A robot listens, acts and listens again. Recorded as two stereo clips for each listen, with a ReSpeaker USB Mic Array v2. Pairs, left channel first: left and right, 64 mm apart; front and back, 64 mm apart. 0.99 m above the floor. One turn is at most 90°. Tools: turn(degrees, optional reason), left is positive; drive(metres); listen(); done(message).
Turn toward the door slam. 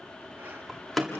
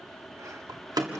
turn(degrees=90, reason="The door slam: straight behind.")
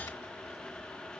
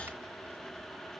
turn(degrees=90, reason="Nothing new. It was at 90° left.")
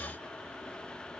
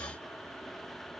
done("I heard a door slam from this way, but can't make it out now.")